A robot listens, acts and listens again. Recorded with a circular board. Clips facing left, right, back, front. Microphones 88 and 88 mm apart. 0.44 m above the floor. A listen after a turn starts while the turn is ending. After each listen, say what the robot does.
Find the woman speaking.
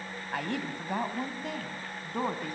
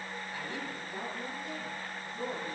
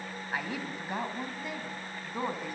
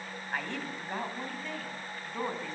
Turn 100° left.
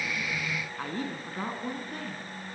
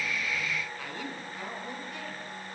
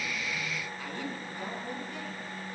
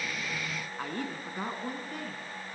Turn 40° left.
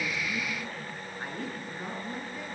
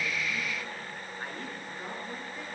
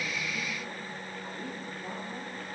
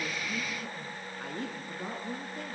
Facing the woman speaking, over 4 m away.